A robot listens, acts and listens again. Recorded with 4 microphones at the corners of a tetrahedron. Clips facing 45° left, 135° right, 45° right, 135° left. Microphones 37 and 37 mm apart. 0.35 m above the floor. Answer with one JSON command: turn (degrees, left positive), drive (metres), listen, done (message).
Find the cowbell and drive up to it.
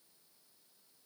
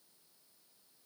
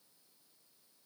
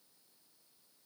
{"listen": true}
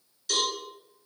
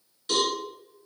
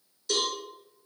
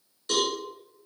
{"turn": 170}
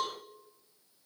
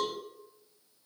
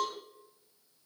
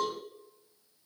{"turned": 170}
{"listen": true}
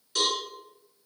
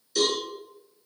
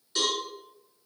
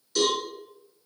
{"turn": 15}
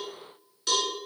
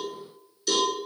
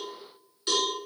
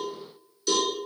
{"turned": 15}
{"drive": 1.0}
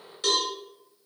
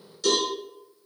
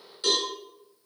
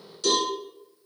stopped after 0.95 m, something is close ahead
{"turn": 10}
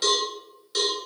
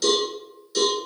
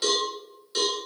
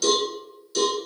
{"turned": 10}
{"done": "Arrived at the cowbell, straight ahead."}